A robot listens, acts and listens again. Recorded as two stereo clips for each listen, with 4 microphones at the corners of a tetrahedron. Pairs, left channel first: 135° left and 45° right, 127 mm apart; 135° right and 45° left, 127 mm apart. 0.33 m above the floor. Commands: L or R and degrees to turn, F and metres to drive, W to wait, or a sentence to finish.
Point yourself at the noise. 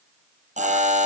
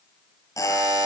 R70
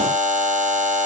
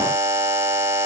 R25
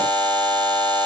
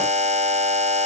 L10
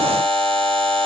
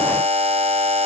Found it: a buzzer, straight ahead.